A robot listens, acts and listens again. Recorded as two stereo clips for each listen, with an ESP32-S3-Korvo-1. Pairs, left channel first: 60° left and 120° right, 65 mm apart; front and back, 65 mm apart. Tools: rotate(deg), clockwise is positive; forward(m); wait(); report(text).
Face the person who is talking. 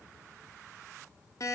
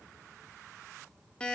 wait()
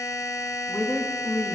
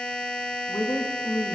report("Facing the woman speaking.")